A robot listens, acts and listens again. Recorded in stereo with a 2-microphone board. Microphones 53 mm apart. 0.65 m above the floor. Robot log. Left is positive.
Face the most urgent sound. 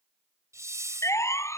note: The siren: about 70° left or 110° left.
cmd yaw +70
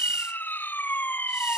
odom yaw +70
note: So it is at 40° left.
cmd yaw +40
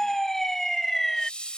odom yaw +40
note: The siren is now 10° left.
cmd yaw +10
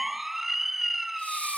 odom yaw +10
end: Facing the siren.